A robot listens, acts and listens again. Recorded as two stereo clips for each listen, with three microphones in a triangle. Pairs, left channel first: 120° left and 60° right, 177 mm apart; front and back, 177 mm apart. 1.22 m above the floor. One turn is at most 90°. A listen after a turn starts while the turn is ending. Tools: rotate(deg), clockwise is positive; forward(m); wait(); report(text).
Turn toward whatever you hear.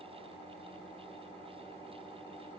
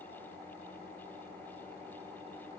wait()
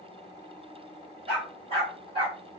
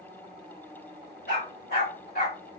report("Facing the dog barking.")